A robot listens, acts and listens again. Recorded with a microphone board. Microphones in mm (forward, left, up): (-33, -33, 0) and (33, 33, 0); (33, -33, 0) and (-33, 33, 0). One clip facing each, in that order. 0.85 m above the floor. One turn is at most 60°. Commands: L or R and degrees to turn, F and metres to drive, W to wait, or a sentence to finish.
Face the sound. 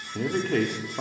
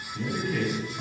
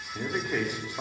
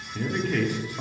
R60
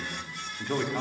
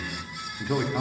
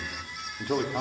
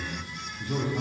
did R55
R40
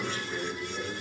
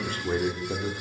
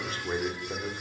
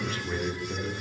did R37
L15
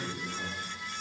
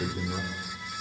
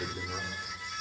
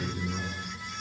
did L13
L10
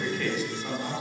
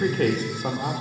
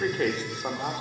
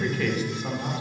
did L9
L10
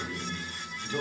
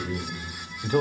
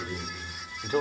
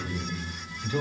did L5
Facing the man speaking.